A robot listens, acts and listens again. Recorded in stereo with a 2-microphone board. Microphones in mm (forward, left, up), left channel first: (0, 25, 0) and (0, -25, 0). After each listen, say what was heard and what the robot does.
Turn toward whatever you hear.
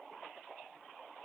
Keep listening.
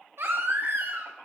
The baby crying: about 55° right or 125° right. Turn 55° right.
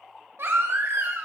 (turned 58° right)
So it is at 65° right. Turn 65° right.
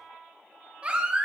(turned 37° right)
The baby crying is now 25° right. Turn 25° right.
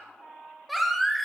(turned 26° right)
Facing the baby crying, 1 to 2 m away.